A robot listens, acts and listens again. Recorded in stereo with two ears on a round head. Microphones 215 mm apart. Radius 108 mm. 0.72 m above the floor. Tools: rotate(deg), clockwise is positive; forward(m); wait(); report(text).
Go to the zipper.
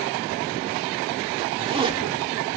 rotate(25)
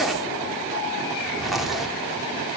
forward(1.0)
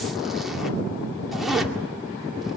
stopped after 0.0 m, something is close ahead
report("Something is in my way. I am facing the zipper but have not reached it.")